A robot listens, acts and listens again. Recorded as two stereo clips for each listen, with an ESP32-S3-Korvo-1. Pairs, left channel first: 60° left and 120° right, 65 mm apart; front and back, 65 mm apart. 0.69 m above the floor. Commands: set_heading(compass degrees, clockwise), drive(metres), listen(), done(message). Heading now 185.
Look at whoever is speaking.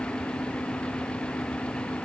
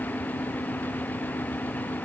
listen()
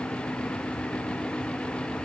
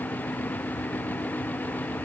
listen()
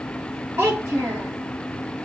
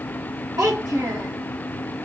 set_heading(350)
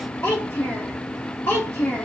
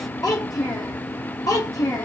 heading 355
done("Found it: a child speaking, straight ahead, 1 to 2 m away.")